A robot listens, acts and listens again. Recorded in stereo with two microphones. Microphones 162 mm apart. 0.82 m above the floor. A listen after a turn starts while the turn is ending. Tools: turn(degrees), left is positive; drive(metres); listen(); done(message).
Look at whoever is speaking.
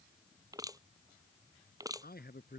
turn(degrees=90)
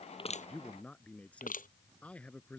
turn(degrees=10)
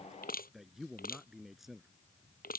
done("Facing the man speaking.")